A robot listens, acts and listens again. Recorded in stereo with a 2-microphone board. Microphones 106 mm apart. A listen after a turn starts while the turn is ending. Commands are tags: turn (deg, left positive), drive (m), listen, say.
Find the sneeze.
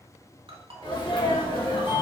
<turn deg="45"/>
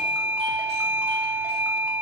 <listen/>
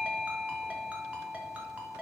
<say>I heard a sneeze, but can't make it out now. It was about straight ahead or 90° left.</say>